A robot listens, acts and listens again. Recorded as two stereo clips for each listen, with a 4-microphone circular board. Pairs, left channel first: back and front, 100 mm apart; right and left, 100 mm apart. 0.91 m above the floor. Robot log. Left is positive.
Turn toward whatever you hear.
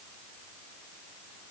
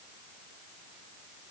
cmd idle
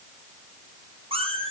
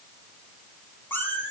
note: The cat meowing: 20° right.
cmd yaw -20
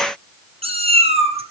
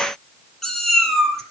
end: Found it: a cat meowing, straight ahead, 2 to 4 m away.